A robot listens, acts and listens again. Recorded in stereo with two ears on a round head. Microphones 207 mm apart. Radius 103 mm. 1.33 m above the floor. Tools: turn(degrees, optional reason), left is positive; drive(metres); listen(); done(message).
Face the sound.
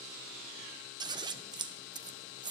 turn(degrees=-20, reason="The scissors: about 20° right or 160° right.")
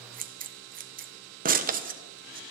turn(degrees=-140, reason="So it is at 140° right.")
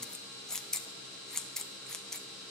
done("Facing the scissors, 1 to 2 m away.")